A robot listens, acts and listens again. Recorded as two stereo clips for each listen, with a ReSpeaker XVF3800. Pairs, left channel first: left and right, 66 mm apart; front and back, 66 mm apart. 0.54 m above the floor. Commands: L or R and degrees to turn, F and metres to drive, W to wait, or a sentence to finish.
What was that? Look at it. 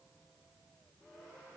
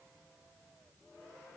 W
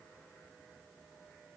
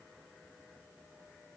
W
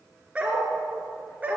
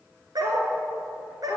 R160
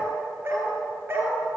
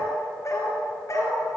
R35
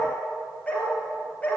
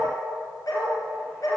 L20
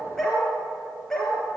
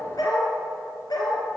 Found it: a dog barking, straight ahead.